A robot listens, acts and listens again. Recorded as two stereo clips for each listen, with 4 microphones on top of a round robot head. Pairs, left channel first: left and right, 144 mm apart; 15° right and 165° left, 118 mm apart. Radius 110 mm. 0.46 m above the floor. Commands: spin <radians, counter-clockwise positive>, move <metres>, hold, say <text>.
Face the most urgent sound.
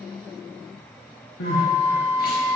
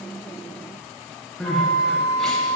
spin 1.31
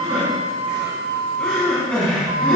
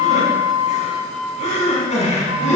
say Found it: crying, straight ahead.